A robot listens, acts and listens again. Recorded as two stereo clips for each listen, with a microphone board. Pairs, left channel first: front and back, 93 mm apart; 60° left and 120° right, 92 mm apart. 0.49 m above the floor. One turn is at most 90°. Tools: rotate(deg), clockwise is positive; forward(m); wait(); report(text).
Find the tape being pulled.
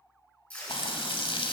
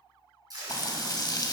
rotate(75)
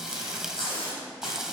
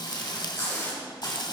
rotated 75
report("Found it: tape being pulled, straight ahead, over 4 m away.")